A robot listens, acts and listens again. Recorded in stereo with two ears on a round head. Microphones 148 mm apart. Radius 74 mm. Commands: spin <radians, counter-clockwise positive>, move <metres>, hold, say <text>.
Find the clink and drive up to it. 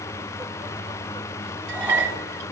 spin -1.57
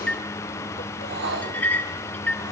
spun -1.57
spin 0.17
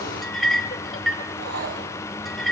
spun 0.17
move 1.0
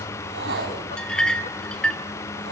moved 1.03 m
move 1.0
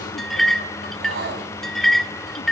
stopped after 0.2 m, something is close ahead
say Arrived at the clink, straight ahead.